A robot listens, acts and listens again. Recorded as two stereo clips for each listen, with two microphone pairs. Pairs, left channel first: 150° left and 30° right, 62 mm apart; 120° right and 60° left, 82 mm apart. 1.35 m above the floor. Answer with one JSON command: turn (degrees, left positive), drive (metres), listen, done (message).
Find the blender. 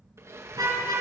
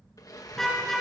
{"turn": -75}
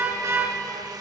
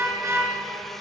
{"turn": -35}
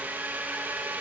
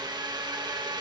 {"turn": 30}
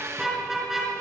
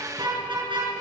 {"turn": 10}
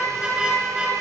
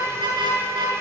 {"listen": true}
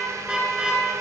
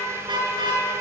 {"listen": true}
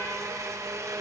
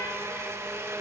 {"done": "Facing the blender, 1 to 2 m away."}